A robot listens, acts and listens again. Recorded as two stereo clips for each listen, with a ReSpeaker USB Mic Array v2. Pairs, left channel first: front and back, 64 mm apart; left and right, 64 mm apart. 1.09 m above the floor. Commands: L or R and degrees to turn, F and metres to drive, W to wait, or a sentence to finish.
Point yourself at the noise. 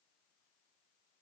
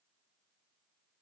W
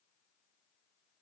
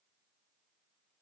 W
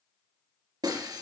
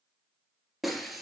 L180
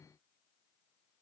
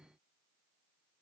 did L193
R10
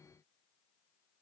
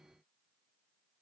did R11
I heard breaking glass from this way, but can't make it out now.